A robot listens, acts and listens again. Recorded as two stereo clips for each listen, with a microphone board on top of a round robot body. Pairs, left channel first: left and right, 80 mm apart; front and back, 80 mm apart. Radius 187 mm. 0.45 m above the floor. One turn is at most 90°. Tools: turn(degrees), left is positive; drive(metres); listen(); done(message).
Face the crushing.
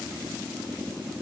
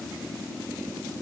listen()
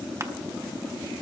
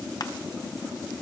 listen()
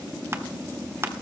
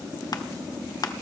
turn(degrees=-30)
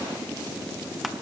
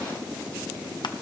listen()
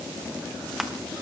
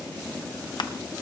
done("Found it: crushing, straight ahead, 1 to 2 m away.")